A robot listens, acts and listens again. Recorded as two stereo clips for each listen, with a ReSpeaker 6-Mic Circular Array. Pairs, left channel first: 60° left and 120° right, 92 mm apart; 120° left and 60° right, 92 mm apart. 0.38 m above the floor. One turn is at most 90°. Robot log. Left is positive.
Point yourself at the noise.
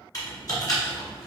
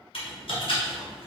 note: The typing on a keyboard: 110° left.
cmd yaw +90
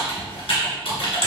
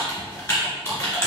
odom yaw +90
note: The typing on a keyboard is now 60° left.
cmd yaw +60
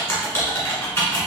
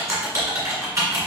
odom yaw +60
end: Facing the typing on a keyboard.